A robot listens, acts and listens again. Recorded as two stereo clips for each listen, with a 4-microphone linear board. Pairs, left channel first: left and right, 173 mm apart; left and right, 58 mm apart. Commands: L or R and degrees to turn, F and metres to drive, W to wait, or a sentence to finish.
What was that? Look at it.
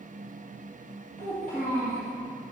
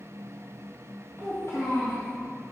L60
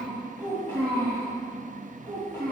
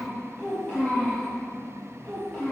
L20
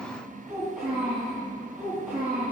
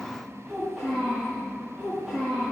Found it: a child speaking, straight ahead.